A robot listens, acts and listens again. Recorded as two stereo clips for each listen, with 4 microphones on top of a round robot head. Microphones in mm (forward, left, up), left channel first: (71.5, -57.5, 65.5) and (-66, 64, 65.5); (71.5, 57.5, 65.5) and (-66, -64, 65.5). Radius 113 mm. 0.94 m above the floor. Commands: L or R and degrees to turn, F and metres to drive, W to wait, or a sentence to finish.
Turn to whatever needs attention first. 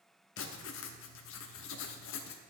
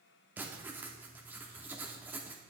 W
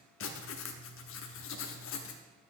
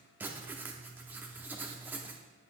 W
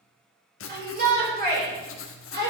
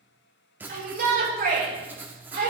L180
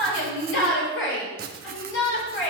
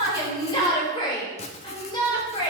R25
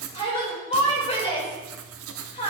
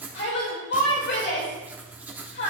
L15
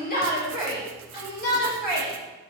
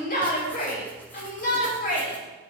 Found it: a shout, straight ahead, 2 to 4 m away.